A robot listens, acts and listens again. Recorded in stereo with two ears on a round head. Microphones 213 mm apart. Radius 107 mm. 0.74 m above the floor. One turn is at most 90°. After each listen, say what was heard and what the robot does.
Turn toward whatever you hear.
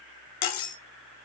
Turn 90° left.
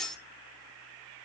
Facing the cutlery clinking.